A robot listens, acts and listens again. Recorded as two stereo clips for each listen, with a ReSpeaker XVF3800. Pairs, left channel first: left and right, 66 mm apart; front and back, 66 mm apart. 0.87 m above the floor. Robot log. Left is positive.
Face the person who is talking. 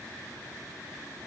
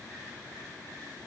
cmd idle
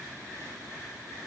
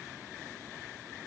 cmd idle
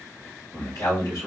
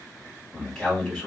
note: The man speaking: 75° left.
cmd yaw +75
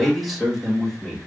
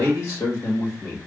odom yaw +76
end: Found it: a man speaking, straight ahead.